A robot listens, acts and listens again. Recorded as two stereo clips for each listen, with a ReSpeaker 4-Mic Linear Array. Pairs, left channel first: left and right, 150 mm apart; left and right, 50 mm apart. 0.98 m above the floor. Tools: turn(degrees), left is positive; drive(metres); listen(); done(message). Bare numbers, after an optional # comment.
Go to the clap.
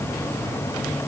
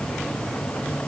listen()
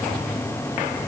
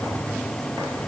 listen()
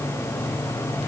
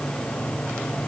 done("I can't make out a clap.")